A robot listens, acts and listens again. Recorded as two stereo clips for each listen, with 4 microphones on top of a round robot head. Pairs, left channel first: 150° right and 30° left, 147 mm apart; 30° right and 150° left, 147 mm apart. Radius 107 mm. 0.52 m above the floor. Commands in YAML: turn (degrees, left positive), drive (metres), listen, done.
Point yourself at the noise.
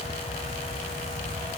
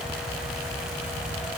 listen: true
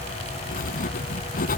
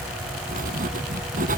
turn: 180
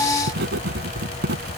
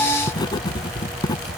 turn: 30
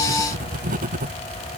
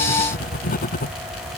done: "Found it: writing, straight ahead."